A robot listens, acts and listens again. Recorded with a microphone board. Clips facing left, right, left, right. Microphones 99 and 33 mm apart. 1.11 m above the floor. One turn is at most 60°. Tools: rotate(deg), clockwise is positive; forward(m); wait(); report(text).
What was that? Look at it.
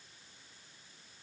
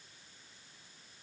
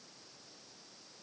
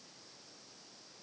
wait()
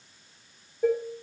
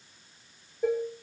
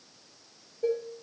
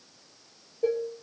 rotate(-30)
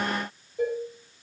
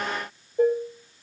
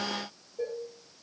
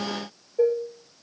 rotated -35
rotate(35)
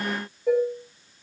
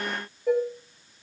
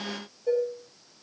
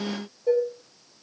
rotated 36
report("Found it: dishes clattering, straight ahead.")